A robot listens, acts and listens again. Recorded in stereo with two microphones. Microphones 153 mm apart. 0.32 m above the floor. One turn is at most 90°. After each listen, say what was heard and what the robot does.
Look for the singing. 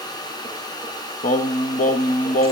The singing: about 65° left or 115° left. Turn 65° left.
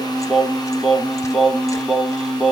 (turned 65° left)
Found it: singing, straight ahead.